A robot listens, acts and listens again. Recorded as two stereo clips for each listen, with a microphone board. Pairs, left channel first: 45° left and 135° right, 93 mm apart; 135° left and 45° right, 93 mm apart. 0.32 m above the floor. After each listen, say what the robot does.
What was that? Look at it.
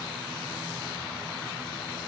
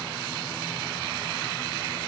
Keep listening.
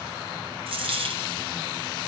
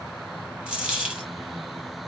Turn 120° right.
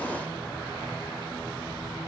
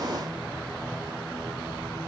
Facing where the dropped coin came from. I can't hear it now.